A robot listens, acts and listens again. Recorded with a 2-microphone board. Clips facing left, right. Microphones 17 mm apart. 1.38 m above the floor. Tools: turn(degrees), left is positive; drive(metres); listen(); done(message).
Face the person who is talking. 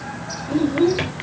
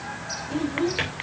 turn(degrees=50)
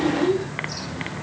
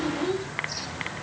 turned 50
done("Facing the child speaking.")